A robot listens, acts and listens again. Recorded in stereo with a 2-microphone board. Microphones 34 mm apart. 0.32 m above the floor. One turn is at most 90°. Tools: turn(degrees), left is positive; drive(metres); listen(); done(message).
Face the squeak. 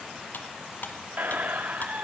turn(degrees=-50)
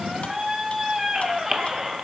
done("Found it: a squeak, straight ahead.")